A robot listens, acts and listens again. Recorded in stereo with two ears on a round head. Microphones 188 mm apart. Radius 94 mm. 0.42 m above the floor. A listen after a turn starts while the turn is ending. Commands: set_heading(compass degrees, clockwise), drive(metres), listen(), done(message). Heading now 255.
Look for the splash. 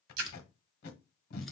set_heading(345)
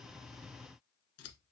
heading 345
done("Facing where the splash came from. I can't hear it now.")